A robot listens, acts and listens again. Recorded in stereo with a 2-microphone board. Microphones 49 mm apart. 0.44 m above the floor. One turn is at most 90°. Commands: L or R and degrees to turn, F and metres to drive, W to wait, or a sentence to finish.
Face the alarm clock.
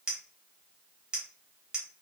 W
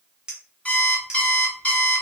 L30
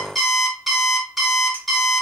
Facing the alarm clock, under 1 m away.